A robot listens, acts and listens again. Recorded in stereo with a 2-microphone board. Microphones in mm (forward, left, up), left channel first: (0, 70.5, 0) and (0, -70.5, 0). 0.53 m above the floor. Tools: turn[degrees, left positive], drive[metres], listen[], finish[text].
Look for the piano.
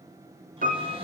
Action: turn[-90]
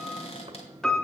Action: finish[Found it: a piano, straight ahead, 1 to 2 m away.]